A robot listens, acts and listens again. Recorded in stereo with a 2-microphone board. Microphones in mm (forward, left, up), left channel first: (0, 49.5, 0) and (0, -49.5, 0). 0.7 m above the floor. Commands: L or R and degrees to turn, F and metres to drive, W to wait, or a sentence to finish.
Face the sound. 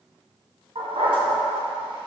R60
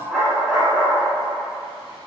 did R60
Found it: a dog barking, straight ahead, 2 to 4 m away.